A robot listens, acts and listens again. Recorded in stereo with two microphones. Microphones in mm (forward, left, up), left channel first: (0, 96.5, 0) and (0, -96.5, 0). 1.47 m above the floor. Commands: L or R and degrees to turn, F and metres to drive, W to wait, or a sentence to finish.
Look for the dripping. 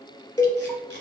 W
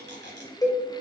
W
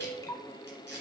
L20
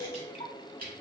L140
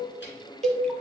W
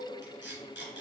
W
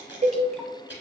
I heard dripping from this way, but can't make it out now.